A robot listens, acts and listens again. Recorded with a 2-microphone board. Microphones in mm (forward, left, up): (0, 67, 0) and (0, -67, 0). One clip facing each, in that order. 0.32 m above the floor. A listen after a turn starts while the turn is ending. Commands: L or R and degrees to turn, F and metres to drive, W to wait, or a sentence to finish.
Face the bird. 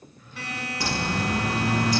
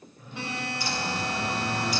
L90
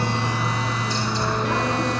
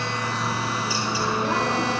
Facing the bird.